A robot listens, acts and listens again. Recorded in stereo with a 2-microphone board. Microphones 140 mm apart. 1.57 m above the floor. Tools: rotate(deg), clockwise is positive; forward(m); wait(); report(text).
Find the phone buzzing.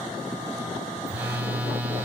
rotate(30)
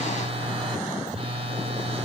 rotate(140)
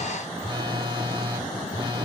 rotate(35)
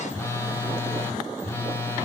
rotate(-15)
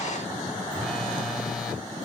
wait()
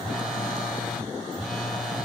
report("Found it: a phone buzzing, straight ahead.")